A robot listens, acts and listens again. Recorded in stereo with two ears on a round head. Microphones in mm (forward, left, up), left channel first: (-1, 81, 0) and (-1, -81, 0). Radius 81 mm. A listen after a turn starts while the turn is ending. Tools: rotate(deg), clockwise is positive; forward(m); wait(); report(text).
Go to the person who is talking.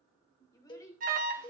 rotate(-20)
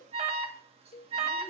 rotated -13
wait()
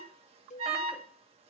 wait()
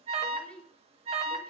forward(1.0)
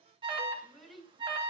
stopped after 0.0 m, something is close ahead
report("Something is in my way. I am facing the child speaking but have not reached it.")